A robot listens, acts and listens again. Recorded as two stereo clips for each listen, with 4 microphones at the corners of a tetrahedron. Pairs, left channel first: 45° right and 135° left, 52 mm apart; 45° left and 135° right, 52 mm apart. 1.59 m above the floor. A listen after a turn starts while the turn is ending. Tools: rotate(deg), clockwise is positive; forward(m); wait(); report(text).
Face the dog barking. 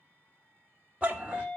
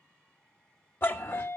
rotate(-70)
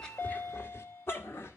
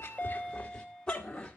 rotate(30)
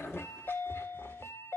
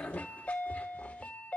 wait()
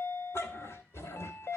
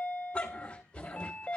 rotate(25)
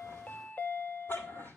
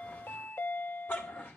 rotate(10)
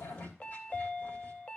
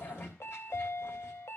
report("Found it: a dog barking, straight ahead.")